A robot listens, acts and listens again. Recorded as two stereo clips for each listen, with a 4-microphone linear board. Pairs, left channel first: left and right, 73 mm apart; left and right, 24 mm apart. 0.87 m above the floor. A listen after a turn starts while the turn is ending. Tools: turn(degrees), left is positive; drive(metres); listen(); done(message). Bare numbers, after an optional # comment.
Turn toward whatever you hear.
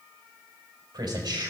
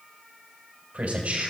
turn(-90)
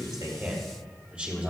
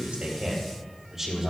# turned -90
# So it is at 20° right.
turn(-20)
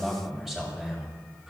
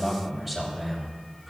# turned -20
# The man speaking is now 10° right.
turn(-10)
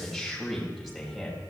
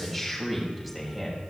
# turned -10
done("Facing the man speaking.")